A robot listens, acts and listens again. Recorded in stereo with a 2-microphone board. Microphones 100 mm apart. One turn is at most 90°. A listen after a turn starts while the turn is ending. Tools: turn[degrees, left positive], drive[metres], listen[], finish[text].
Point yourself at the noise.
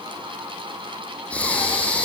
Action: turn[30]
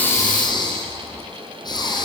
Thought: So it is at 135° left.
Action: turn[90]
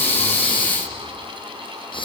Thought: The breathing is now 55° left.
Action: turn[55]
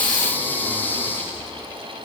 Thought: The breathing is now 20° left.
Action: turn[20]
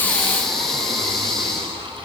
Action: finish[Facing the breathing.]